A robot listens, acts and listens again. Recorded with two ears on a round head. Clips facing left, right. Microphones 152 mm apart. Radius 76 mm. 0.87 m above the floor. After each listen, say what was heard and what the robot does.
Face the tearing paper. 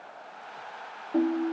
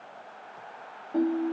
Keep listening.
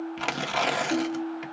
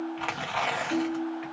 The tearing paper: about 50° left or 130° left. Turn 50° left.
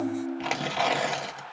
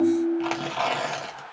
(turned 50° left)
So it is at 10° left. Turn 10° left.
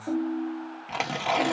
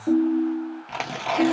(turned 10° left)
Facing the tearing paper.